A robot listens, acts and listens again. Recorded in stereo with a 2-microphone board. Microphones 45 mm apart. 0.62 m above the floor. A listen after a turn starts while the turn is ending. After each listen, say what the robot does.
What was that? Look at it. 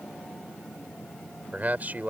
Turn 40° right.
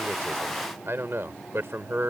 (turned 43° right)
Turn 95° right.
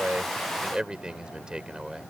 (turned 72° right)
Turn 20° right.
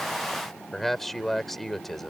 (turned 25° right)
Found it: a man speaking, straight ahead.